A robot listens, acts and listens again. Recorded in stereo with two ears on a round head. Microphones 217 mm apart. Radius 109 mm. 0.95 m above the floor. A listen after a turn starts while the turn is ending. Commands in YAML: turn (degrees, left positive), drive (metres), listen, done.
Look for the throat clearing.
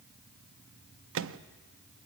listen: true
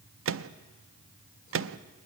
listen: true
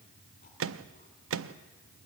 done: "I can't make out throat clearing, only a microwave."